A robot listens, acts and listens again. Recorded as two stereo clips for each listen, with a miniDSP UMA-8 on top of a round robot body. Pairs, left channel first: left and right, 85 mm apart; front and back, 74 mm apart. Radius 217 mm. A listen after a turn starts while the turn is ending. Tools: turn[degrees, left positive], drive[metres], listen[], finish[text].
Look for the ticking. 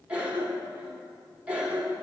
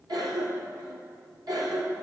Action: listen[]
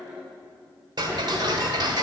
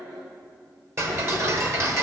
Thought: The ticking: 130° right.
Action: turn[-130]
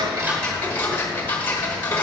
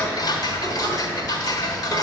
Thought: The ticking is now 25° left.
Action: turn[25]
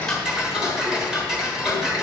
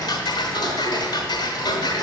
Action: finish[Found it: ticking, straight ahead, 1 to 2 m away.]